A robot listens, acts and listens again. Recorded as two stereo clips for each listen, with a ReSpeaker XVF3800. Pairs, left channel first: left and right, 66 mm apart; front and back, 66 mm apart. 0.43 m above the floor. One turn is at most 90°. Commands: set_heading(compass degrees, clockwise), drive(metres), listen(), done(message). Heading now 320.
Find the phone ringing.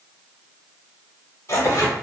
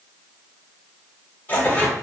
listen()
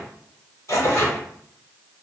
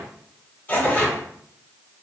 listen()
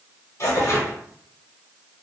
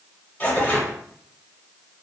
done("I can't make out a phone ringing to turn to.")